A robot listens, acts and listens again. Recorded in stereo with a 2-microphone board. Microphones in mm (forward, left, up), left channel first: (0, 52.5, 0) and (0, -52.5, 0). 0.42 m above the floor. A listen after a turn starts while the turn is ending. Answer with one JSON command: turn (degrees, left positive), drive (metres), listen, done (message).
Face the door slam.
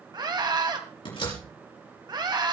{"turn": 55}
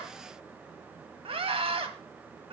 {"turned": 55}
{"listen": true}
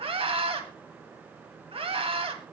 {"done": "I heard a door slam, but can't make it out now. It was about straight ahead or 70° left."}